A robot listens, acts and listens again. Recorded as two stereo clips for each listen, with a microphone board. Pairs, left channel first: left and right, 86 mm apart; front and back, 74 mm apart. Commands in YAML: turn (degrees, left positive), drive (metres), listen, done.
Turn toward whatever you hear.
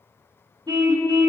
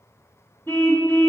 turn: -60
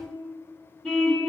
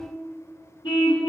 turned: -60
done: "Found it: a car horn, straight ahead."